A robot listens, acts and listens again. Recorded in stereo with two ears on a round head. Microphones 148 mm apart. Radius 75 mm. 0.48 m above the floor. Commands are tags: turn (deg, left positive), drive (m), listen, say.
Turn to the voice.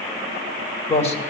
<turn deg="40"/>
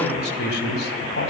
<turn deg="105"/>
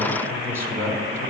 <turn deg="-15"/>
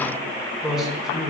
<say>Found it: a man speaking, straight ahead.</say>